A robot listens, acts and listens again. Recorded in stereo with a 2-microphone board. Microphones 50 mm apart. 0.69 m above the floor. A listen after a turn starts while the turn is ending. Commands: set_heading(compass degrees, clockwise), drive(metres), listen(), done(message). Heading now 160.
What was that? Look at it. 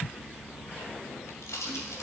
set_heading(70)
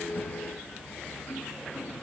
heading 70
done("I heard a pop from this way, but can't make it out now.")